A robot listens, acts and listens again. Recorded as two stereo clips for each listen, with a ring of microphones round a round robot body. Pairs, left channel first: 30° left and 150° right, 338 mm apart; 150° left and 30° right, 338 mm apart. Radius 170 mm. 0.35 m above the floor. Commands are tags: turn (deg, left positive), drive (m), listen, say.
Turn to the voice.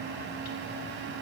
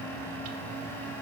<listen/>
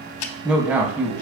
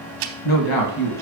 <turn deg="125"/>
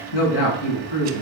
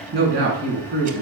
<turn deg="30"/>
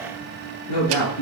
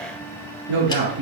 <say>Found it: a man speaking, straight ahead, over 4 m away.</say>